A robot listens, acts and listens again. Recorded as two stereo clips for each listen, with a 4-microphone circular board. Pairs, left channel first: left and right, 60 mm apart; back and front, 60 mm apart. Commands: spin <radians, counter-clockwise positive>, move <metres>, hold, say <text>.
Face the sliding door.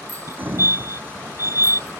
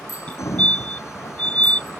spin -2.53
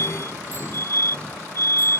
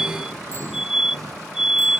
spin 0.35
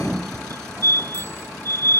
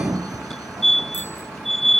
spin 0.17
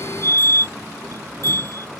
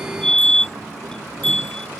hold
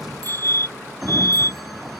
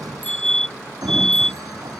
say Found it: a sliding door, straight ahead.